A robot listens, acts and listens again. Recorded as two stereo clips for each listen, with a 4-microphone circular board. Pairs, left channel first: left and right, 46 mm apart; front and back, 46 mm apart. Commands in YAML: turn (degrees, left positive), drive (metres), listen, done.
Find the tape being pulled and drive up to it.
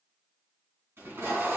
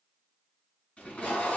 turn: -60
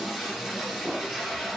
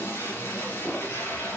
turn: -15
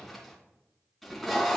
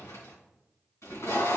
drive: 1.0
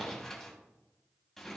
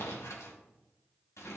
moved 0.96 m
turn: 10
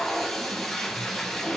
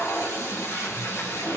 drive: 1.0
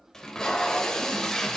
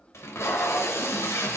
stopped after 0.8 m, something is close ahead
turn: 10
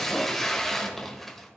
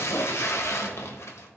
done: "Arrived at the tape being pulled, straight ahead."